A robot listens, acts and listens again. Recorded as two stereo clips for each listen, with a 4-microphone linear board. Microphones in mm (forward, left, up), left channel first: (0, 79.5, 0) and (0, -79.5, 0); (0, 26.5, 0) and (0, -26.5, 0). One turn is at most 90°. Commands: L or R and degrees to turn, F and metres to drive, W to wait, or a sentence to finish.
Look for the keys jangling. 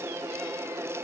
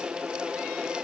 W
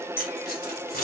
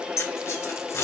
L65
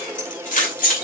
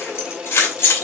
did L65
L60
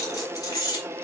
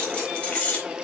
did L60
L25
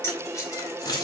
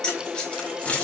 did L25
L25
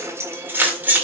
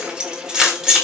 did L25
R10
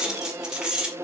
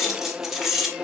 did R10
Facing the keys jangling.